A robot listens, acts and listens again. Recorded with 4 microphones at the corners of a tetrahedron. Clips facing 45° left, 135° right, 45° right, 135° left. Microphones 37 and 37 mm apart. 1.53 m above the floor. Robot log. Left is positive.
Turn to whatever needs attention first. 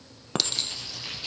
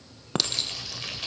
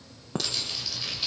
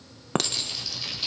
cmd idle
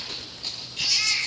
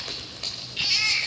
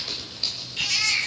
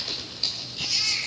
note: The baby crying: 75° right.
cmd yaw -75
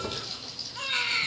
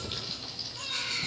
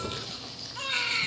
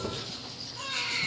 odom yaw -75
end: Found it: a baby crying, straight ahead, 2 to 4 m away.